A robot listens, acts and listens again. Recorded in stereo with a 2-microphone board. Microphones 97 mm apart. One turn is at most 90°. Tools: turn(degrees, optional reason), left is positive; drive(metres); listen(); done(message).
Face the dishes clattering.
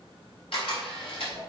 listen()
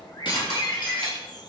turn(degrees=55, reason="The dishes clattering: about 55° left or 125° left.")
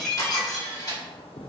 done("Found it: dishes clattering, straight ahead, 2 to 4 m away.")